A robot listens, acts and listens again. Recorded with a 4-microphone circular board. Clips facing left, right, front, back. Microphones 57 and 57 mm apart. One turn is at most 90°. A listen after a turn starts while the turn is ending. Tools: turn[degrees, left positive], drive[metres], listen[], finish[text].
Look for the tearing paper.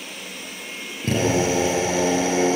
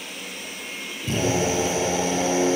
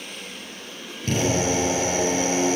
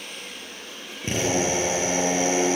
Action: listen[]
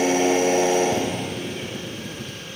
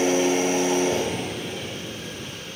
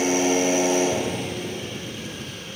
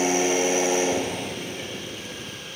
Action: listen[]
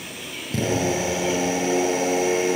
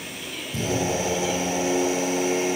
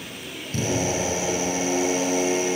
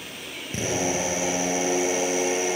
Action: finish[I can't make out tearing paper, only a drill.]